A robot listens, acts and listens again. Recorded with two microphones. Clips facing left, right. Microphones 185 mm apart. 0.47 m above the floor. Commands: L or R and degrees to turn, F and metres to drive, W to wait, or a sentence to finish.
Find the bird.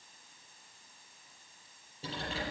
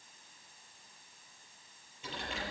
W
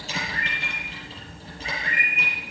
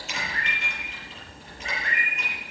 L90
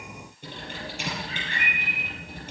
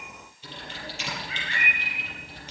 R15
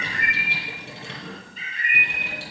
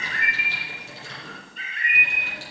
Found it: a bird, straight ahead.